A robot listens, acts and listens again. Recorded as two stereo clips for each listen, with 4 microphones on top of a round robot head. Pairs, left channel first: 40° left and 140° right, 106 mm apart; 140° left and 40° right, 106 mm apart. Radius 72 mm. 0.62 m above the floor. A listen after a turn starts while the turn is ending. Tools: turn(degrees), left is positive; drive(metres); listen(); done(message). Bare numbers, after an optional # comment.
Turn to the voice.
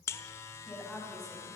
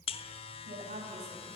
# The woman speaking: 45° right.
turn(-45)
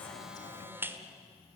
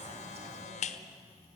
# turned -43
listen()
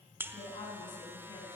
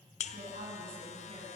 # The woman speaking is now 10° right.
turn(-10)
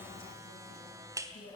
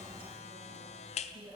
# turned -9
done("Found it: a woman speaking, straight ahead.")